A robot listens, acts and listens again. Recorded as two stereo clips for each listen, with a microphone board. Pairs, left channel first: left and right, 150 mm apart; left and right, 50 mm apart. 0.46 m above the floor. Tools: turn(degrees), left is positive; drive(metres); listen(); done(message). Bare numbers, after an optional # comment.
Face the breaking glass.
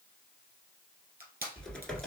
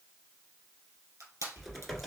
listen()
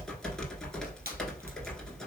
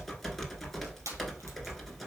listen()
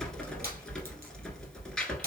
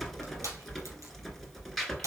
done("I can't make out breaking glass, only crushing and typing on a keyboard.")